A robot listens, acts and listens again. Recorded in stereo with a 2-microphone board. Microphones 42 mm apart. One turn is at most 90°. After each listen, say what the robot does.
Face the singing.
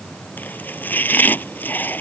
Keep listening.
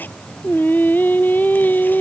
Turn 45° left.
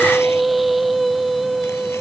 Facing the singing.